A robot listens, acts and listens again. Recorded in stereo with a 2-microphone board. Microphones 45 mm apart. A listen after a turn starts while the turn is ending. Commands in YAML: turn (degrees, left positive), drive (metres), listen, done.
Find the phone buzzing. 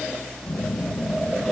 turn: 60
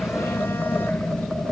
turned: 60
turn: 60
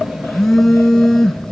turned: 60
done: "Facing the phone buzzing, 2 to 4 m away."